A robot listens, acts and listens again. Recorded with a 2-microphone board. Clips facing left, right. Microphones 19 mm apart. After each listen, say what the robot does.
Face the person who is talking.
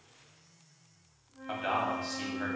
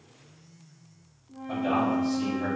Turn 75° left.
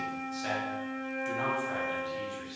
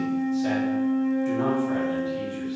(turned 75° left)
Keep listening.
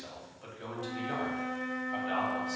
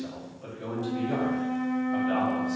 Turn 15° left.
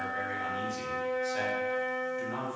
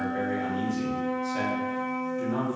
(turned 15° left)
Facing the man speaking, 1 to 2 m away.